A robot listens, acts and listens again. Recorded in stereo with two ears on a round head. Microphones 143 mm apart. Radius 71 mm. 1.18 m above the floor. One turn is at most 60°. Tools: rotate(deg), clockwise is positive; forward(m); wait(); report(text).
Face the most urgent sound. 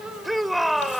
rotate(-30)
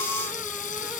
wait()
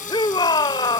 rotate(-60)
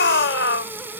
rotate(-60)
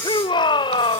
rotate(-30)
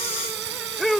report("Found it: a shout, straight ahead.")